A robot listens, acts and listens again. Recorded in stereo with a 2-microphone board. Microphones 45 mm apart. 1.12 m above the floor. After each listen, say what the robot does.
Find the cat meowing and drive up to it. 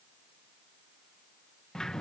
Keep listening.
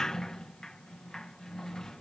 Keep listening.
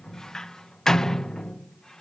I can't make out a cat meowing to turn to.